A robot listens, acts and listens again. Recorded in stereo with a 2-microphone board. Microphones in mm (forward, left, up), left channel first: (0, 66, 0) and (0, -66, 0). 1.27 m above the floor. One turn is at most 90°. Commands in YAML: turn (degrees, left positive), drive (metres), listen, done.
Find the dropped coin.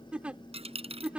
turn: -50
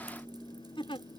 listen: true
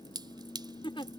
done: "I heard a dropped coin, but can't make it out now. It was about straight ahead or 80° right."